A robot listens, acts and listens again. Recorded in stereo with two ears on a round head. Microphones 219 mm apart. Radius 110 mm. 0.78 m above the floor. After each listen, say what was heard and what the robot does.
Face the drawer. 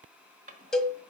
The drawer: about 30° right or 150° right. Turn 30° right.
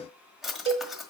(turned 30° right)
Found it: a drawer, straight ahead, 1 to 2 m away.